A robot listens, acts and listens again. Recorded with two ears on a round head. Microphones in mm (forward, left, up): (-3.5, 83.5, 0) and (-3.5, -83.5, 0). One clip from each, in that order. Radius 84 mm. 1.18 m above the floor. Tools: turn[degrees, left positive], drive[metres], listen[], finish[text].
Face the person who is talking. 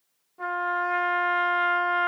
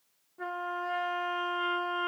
Action: listen[]
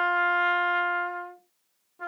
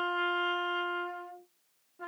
Action: listen[]
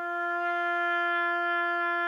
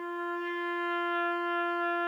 Action: finish[I can't make out anyone speaking, only a trumpet.]